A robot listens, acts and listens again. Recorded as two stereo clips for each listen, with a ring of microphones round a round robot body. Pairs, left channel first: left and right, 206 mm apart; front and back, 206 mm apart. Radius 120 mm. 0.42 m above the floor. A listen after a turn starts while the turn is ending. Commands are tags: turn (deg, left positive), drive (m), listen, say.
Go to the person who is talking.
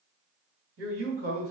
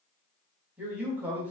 <turn deg="-95"/>
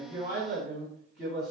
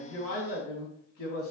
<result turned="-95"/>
<drive m="1.0"/>
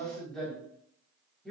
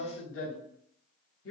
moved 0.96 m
<drive m="1.0"/>
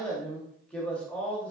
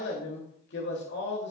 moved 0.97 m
<drive m="1.0"/>
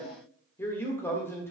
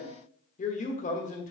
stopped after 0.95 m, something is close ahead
<turn deg="20"/>
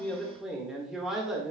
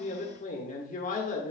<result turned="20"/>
<say>I am next to the man speaking.</say>